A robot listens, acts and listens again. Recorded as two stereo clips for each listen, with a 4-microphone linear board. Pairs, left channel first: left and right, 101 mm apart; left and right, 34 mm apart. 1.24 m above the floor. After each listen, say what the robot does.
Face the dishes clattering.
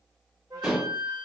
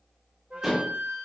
Turn 30° right.
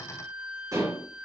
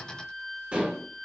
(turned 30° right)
Turn 145° right.
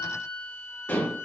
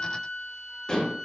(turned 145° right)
Turn 20° left.
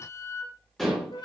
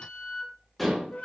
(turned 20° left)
Found it: dishes clattering, straight ahead, 2 to 4 m away.